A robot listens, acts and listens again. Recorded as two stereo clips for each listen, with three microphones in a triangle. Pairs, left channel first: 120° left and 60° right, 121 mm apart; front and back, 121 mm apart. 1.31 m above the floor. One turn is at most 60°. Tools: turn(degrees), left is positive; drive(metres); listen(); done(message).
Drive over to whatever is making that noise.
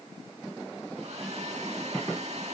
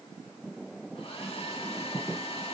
turn(degrees=-35)
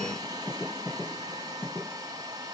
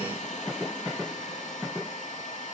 drive(metres=1.0)
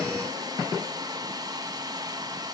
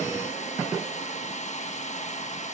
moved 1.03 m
drive(metres=1.0)
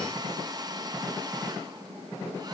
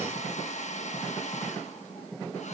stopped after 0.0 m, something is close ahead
done("Arrived at the hair dryer, straight ahead.")